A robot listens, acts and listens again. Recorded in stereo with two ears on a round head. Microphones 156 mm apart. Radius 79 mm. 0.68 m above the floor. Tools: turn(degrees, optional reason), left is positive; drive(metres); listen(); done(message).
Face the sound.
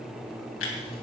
turn(degrees=90)
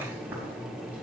listen()
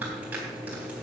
listen()
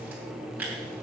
turn(degrees=-10, reason="The tearing paper is now 10° right.")
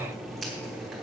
listen()
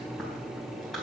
done("Found it: tearing paper, straight ahead, 2 to 4 m away.")